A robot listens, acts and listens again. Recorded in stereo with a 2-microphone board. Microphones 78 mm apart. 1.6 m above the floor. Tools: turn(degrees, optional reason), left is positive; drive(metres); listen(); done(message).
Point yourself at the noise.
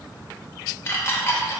turn(degrees=30, reason="The dishes clattering: about 30° left or 150° left.")
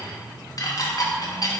turn(degrees=115, reason="So it is at 115° left.")
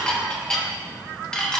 turn(degrees=10, reason="The dishes clattering is now 10° left.")
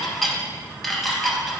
done("Found it: dishes clattering, straight ahead, 1 to 2 m away.")